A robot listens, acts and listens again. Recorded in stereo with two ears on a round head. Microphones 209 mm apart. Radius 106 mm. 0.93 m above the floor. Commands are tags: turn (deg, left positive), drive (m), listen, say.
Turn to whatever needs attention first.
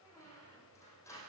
<listen/>
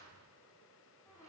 <listen/>
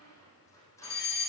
<turn deg="45"/>
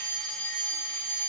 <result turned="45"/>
<say>Found it: a fire alarm, straight ahead.</say>